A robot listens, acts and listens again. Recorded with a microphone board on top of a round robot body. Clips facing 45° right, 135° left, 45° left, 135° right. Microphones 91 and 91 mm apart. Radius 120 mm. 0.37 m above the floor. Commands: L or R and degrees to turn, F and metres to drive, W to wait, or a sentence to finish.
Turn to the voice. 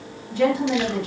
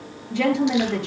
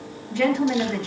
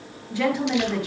L145
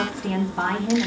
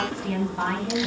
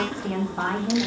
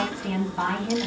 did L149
Found it: a woman speaking, straight ahead, over 4 m away.